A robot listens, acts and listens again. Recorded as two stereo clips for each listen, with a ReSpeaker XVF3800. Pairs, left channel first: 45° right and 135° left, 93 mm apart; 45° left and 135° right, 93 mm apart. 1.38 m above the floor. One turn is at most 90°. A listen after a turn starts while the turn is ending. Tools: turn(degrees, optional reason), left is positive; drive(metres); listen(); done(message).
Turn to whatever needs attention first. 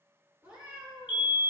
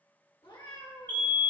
turn(degrees=-20, reason="The fire alarm: 20° right.")
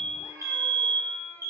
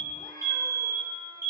done("Facing the fire alarm.")